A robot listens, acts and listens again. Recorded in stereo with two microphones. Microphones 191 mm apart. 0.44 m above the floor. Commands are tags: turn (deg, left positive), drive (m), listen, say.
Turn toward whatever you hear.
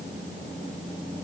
<listen/>
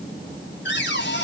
<turn deg="70"/>
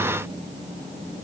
<listen/>
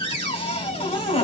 <turn deg="30"/>
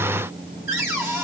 <turn deg="-15"/>
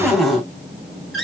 <say>Found it: a cupboard door, straight ahead, 2 to 4 m away.</say>